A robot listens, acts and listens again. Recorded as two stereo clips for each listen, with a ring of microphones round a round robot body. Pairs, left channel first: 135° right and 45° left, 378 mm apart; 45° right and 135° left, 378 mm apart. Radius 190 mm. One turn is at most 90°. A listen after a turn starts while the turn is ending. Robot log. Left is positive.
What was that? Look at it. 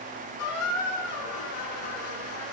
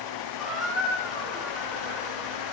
note: The squeak: 135° right.
cmd yaw -90
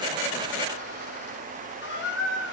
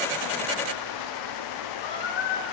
note: The squeak is now 70° right.
cmd yaw -70
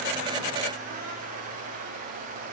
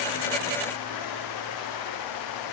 cmd idle
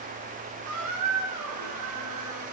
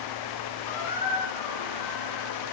end: Facing the squeak.